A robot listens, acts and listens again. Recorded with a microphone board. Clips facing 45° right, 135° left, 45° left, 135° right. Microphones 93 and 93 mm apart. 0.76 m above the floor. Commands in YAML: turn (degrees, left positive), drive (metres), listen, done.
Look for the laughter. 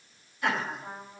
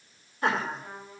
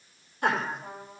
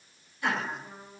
turn: 85
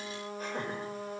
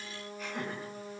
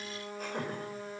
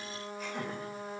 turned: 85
done: "Found it: laughter, straight ahead, 2 to 4 m away."